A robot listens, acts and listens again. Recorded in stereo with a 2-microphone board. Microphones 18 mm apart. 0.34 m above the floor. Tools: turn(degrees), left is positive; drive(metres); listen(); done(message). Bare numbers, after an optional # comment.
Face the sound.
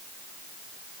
listen()
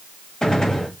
# The gunshot: about 35° left or 145° left.
turn(35)
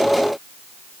listen()
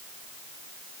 done("I heard a gunshot, but can't make it out now. It was about straight ahead or 110° left.")